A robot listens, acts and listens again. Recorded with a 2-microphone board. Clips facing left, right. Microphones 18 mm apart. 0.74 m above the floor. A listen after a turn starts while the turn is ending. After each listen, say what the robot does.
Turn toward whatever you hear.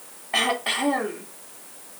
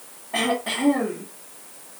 Turn 45° left.
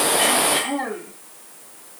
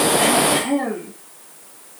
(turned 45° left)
Turn 10° left.
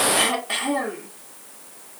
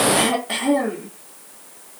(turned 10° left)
Found it: throat clearing, straight ahead.